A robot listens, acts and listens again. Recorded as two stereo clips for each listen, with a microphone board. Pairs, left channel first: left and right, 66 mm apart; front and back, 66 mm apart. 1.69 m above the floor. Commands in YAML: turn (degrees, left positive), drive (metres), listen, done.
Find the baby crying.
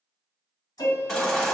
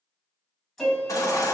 turn: 10
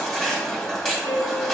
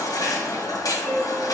done: "Found it: a baby crying, straight ahead."